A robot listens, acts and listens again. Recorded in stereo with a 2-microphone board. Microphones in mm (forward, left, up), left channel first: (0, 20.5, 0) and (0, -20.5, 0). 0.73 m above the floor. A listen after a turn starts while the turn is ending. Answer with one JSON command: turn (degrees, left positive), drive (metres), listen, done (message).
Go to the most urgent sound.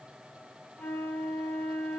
{"listen": true}
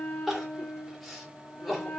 {"turn": 30}
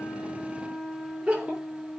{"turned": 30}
{"turn": -30}
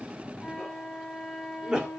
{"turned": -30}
{"turn": -15}
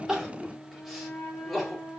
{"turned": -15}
{"drive": 1.0}
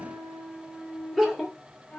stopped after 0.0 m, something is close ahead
{"done": "Something is in my way. I am facing the crying but have not reached it."}